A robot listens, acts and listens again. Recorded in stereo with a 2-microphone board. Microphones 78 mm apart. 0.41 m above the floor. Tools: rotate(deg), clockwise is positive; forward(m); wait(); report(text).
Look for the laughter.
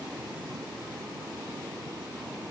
wait()
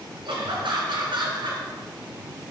rotate(70)
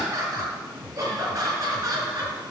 rotate(45)
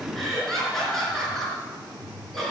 report("Found it: laughter, straight ahead.")